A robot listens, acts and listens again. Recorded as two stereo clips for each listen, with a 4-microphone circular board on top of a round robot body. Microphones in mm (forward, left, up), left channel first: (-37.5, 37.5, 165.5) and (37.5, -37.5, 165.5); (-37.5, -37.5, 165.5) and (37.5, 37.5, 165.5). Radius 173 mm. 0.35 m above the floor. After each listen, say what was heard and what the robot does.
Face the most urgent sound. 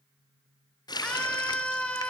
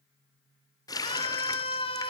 The scream: 150° right. Turn 150° right.
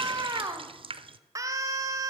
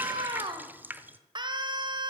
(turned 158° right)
The scream is now 10° left. Turn 10° left.
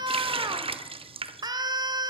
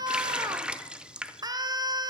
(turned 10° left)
Facing the scream, 1 to 2 m away.